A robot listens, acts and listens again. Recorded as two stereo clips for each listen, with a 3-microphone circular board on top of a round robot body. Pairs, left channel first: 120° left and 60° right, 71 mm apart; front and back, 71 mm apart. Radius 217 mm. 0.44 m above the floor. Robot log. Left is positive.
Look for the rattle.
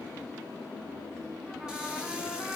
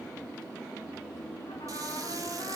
cmd idle
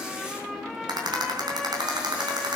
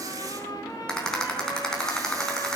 note: The rattle: 80° right.
cmd yaw -80
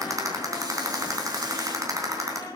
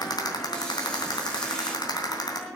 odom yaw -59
note: The rattle is now 20° right.
cmd yaw -20
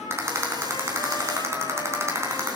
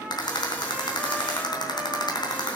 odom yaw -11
end: Facing the rattle.